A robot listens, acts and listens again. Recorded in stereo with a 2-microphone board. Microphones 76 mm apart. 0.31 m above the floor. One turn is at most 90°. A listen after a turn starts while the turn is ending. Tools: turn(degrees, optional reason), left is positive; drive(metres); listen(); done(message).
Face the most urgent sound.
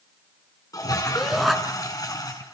turn(degrees=-30)
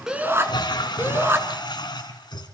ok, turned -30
turn(degrees=-90, reason="So it is at 145° right.")
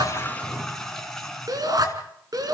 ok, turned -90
turn(degrees=-60, reason="The shout is now 60° right.")
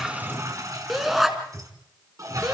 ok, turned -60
done("Found it: a shout, straight ahead, 2 to 4 m away.")